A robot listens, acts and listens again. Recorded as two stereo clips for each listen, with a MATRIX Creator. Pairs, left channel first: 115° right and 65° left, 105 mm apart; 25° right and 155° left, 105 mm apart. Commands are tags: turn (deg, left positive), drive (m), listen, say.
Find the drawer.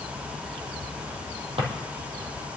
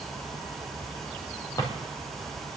<turn deg="35"/>
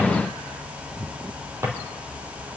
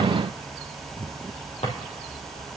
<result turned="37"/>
<say>Facing the drawer, 2 to 4 m away.</say>